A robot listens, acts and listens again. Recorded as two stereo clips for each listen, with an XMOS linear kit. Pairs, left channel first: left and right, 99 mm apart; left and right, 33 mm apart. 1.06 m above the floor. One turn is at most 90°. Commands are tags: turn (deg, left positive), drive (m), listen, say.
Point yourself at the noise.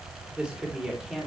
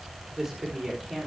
<turn deg="-30"/>
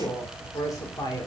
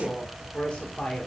<turn deg="40"/>
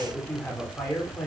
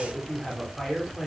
<turn deg="15"/>
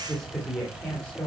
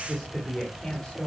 <turn deg="10"/>
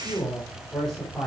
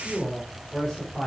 <say>Found it: a woman speaking, straight ahead, 2 to 4 m away.</say>